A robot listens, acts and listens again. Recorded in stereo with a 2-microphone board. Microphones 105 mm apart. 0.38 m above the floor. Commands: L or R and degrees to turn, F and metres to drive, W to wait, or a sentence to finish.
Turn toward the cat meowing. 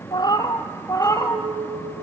L25
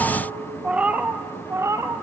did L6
R30
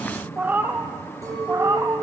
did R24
R25
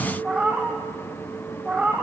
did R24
R10
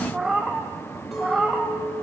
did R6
Found it: a cat meowing, straight ahead, 2 to 4 m away.